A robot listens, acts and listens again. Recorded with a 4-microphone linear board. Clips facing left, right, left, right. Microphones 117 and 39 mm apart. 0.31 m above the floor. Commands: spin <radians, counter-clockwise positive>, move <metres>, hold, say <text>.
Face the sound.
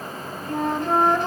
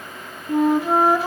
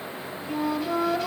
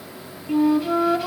spin -0.52
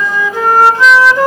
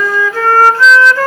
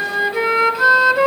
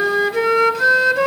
spin 0.35
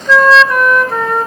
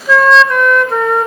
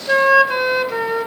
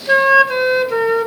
say Found it: a flute, straight ahead.